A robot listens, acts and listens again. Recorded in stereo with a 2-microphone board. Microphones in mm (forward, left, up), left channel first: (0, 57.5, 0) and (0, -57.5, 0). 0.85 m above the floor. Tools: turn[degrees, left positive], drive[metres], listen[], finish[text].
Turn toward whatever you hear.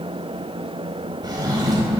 Thought: The drawer: about 35° right or 145° right.
Action: turn[-35]
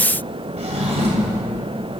Thought: So it is at 110° right.
Action: turn[-110]
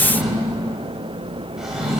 Action: finish[Facing the drawer, 1 to 2 m away.]